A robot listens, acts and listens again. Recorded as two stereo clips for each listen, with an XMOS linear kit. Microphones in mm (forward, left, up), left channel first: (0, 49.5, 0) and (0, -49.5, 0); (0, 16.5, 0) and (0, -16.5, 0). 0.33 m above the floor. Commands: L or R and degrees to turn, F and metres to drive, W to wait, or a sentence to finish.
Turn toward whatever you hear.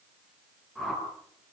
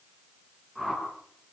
L30
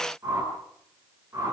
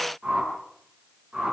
R30
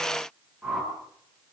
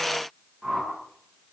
Found it: a whoosh, straight ahead.